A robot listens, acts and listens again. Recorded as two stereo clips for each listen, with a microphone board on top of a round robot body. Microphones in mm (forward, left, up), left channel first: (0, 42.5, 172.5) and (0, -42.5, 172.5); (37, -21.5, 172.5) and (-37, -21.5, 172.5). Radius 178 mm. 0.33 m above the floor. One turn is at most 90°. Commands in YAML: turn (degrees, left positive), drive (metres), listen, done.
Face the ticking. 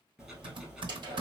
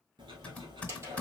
turn: -90
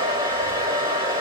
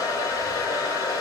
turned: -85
turn: -85
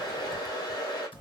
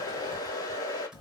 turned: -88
done: "Facing the ticking."